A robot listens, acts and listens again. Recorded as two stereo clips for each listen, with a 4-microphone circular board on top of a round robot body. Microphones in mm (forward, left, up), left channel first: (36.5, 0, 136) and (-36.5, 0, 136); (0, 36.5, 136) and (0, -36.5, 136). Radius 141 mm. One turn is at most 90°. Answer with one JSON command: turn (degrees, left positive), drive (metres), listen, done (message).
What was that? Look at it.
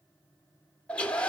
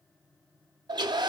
{"turn": -75}
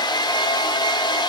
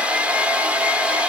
{"turn": -20}
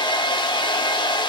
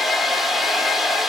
{"done": "Found it: a hair dryer, straight ahead, under 1 m away."}